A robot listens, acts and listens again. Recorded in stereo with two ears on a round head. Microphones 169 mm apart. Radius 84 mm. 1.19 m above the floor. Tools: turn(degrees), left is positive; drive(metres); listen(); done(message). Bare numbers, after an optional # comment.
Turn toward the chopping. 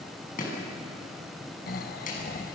# The chopping: about 45° left or 135° left.
turn(45)
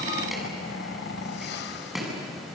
done("Found it: chopping, straight ahead.")